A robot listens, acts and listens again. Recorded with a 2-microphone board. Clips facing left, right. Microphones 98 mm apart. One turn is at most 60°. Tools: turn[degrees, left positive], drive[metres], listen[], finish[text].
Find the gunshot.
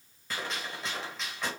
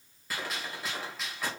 Action: turn[-30]
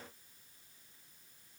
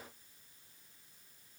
Action: listen[]
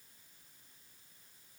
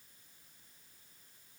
Action: finish[I heard a gunshot, but can't make it out now. It was about 25° left or 145° right.]